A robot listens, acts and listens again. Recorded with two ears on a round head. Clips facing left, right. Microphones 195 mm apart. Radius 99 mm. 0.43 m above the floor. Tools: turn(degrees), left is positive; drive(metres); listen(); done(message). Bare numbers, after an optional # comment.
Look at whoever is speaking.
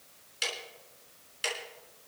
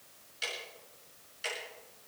listen()
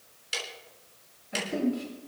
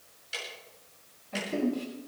turn(30)
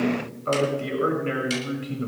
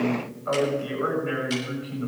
# So it is at 140° left.
turn(140)
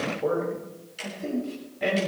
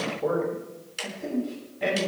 done("Facing the man speaking, over 4 m away.")